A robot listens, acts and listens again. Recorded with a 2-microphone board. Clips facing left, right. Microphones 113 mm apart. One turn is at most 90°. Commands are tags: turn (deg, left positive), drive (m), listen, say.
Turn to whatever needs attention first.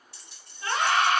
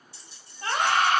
<turn deg="-40"/>
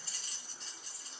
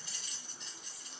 <listen/>
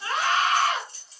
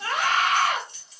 <turn deg="-90"/>
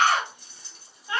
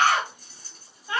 <turn deg="-10"/>
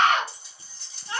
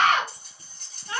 <say>Facing the scream, 1 to 2 m away.</say>